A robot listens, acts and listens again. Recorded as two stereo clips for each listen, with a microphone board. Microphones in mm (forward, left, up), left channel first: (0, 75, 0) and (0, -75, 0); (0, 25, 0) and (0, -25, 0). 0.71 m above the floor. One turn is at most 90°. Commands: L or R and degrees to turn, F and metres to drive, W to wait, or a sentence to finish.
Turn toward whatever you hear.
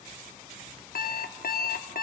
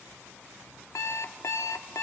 L90
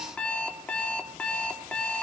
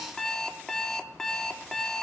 L10
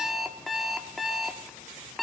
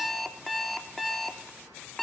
Facing the alarm clock.